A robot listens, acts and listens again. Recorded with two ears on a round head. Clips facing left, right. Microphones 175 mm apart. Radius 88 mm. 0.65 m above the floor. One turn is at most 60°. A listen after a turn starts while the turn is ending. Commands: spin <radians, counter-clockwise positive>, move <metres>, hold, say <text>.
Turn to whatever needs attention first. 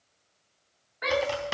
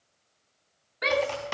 spin -0.70
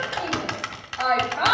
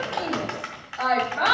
spin -0.17
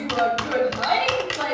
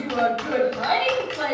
say Facing the shout, 1 to 2 m away.